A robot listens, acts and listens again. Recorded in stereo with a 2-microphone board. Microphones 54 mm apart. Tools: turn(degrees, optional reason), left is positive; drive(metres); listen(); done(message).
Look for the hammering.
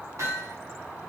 turn(degrees=-75, reason="The hammering: about 75° right or 105° right.")
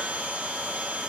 listen()
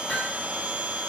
done("Facing the hammering.")